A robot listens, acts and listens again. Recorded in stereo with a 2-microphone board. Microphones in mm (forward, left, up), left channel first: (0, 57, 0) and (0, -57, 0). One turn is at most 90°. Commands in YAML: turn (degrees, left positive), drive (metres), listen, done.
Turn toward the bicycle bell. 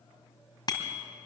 turn: 40
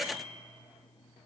turn: 90
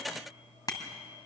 turn: 35
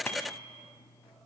turn: 15
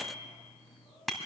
done: "Facing the bicycle bell, 2 to 4 m away."